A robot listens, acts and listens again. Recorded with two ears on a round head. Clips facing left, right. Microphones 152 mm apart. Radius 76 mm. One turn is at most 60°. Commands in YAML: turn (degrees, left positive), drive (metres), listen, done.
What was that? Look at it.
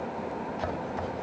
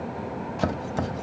turn: -60
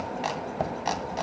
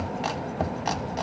done: "Found it: chopping, straight ahead, 1 to 2 m away."